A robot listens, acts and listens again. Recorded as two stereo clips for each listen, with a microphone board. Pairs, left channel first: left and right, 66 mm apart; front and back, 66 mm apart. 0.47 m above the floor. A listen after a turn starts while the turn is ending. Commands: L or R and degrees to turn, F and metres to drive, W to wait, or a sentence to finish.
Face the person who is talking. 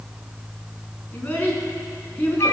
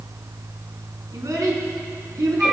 L150
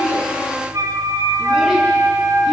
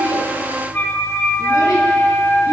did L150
W
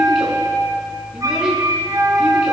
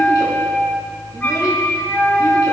W
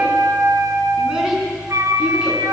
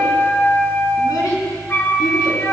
I heard a child speaking from this way, but can't make it out now.